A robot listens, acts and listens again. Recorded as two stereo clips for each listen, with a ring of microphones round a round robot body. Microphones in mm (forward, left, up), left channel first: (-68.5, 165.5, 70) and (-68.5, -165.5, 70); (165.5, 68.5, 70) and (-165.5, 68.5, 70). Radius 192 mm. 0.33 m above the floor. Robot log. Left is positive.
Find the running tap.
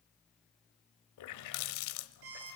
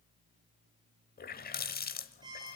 note: The running tap: 60° left.
cmd yaw +60
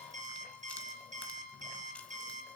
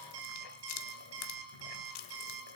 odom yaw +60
end: Found it: a running tap, straight ahead, 1 to 2 m away.